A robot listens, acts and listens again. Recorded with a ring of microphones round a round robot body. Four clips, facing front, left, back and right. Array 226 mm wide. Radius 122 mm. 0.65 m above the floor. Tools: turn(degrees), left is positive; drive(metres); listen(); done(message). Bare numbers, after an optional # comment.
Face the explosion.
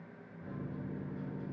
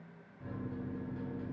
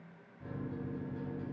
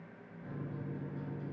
listen()
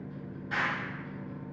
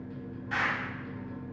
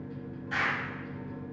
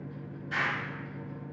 # The explosion: 50° left.
turn(50)
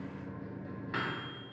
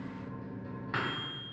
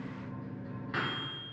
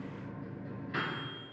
done("Facing where the explosion came from. I can't hear it now.")